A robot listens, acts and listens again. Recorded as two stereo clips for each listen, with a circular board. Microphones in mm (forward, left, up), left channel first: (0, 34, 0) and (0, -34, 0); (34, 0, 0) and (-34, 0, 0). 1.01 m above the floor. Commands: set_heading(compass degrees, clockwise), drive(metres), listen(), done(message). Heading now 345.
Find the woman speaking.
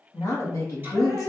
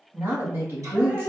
set_heading(210)
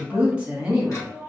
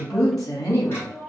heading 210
set_heading(230)
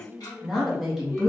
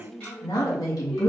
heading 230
done("Facing the woman speaking, 1 to 2 m away.")